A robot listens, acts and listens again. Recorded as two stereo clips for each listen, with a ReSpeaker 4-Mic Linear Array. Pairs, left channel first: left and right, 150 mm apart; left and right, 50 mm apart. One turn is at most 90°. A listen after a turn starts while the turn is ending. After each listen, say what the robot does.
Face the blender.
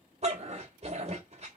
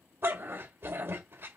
Keep listening.
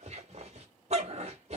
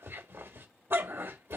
Keep listening.
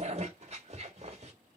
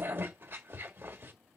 I can't make out a blender, only a dog barking.